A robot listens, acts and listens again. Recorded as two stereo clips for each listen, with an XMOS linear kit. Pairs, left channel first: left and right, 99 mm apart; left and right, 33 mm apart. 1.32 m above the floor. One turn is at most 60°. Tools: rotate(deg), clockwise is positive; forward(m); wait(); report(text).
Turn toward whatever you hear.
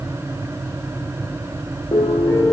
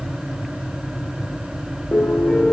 rotate(-35)
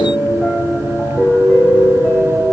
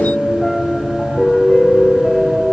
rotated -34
report("Facing the piano, 1 to 2 m away.")